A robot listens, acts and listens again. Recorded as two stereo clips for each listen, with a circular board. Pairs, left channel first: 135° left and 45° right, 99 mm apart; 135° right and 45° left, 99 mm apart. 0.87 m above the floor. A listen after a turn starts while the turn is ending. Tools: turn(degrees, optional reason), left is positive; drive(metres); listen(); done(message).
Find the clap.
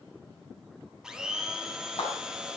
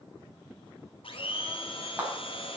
turn(degrees=120, reason="The clap: 120° left.")
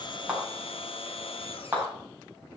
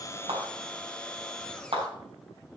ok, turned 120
turn(degrees=30, reason="The clap is now 30° left.")
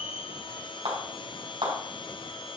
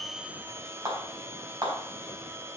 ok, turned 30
turn(degrees=-10, reason="The clap is now 10° right.")
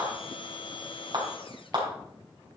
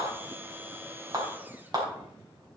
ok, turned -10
done("Facing the clap, 2 to 4 m away.")